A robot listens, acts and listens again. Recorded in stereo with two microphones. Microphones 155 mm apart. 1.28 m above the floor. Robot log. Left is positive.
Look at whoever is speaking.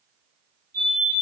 cmd idle
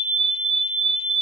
cmd idle
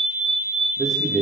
cmd yaw +30
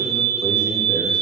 cmd idle
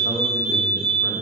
cmd idle
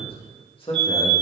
note: So it is at 145° left.
cmd yaw +145
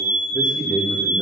note: The man speaking is now 10° left.
cmd yaw +10
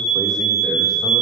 cmd idle
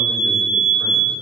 cmd idle
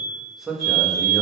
end: Found it: a man speaking, straight ahead.